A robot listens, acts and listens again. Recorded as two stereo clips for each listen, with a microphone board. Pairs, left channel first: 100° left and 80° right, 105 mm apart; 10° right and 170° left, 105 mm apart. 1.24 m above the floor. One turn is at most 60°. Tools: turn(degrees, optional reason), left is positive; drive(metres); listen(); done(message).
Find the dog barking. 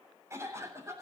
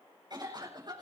listen()
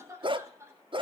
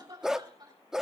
turn(degrees=-60, reason="The dog barking: 105° right.")
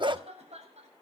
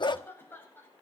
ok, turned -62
turn(degrees=-45, reason="The dog barking is now 45° right.")
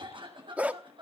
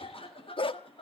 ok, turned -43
done("Facing the dog barking, 1 to 2 m away.")